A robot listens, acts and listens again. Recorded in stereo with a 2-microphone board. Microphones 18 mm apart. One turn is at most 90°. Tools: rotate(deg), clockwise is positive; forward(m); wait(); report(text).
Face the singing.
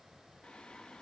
rotate(-65)
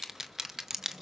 rotate(30)
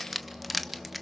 rotate(20)
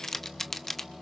rotate(10)
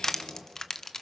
report("Found it: singing, straight ahead.")